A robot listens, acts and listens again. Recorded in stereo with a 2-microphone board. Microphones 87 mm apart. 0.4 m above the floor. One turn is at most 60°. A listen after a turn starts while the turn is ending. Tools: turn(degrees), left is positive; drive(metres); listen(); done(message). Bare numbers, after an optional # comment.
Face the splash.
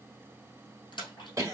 # The splash: about 60° left or 120° left.
turn(60)
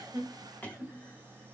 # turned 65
listen()
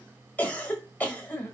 done("I heard a splash, but can't make it out now. It was about 5° right or 55° left.")